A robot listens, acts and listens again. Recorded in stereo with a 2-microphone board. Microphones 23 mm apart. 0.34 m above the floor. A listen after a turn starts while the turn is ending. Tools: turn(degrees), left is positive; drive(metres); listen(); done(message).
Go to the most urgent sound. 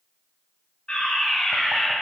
turn(degrees=55)
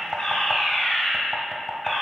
turn(degrees=20)
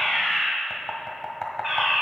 drive(metres=1.0)
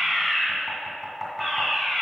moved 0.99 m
drive(metres=1.0)
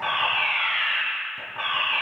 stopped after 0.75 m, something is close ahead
turn(degrees=-10)
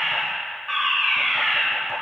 done("Arrived at the fire alarm, straight ahead.")